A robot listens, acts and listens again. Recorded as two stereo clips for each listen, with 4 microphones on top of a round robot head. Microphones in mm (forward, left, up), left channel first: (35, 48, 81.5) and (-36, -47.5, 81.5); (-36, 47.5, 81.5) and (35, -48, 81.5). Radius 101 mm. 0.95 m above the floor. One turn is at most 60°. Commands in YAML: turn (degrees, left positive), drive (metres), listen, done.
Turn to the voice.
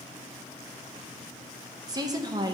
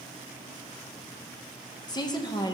turn: 60
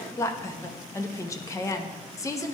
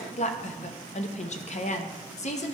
turn: 60
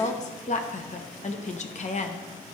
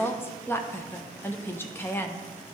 turn: 55
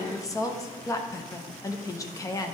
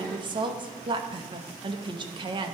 turn: -10
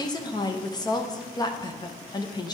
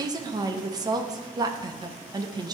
done: "Found it: a woman speaking, straight ahead, under 1 m away."